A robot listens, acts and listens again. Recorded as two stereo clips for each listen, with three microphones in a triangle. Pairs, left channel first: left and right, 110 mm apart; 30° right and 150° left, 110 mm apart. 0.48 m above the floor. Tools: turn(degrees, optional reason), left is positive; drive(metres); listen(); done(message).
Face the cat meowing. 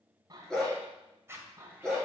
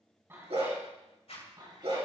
turn(degrees=-160, reason="The cat meowing: 160° right.")
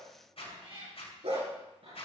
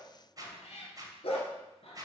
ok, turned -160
turn(degrees=-60, reason="The cat meowing is now 60° right.")
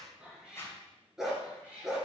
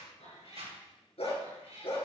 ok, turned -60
turn(degrees=-10, reason="The cat meowing is now 10° right.")
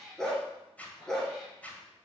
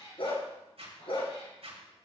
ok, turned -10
done("Found it: a cat meowing, straight ahead.")